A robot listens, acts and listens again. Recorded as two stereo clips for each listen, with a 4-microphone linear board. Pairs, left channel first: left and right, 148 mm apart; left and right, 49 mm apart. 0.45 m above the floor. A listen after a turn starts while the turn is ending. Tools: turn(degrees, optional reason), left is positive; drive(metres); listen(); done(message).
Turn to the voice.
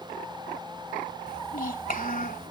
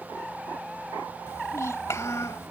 turn(degrees=70, reason="The child speaking: about 70° left or 110° left.")
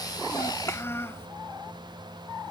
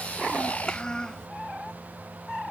turn(degrees=20, reason="So it is at 20° left.")
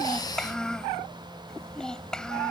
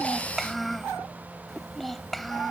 done("Found it: a child speaking, straight ahead.")